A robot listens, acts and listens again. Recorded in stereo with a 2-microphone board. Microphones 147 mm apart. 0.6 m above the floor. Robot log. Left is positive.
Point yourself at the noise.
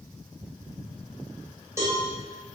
note: The cowbell: about 20° right or 160° right.
cmd yaw -20
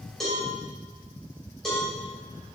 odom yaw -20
end: Found it: a cowbell, straight ahead, 2 to 4 m away.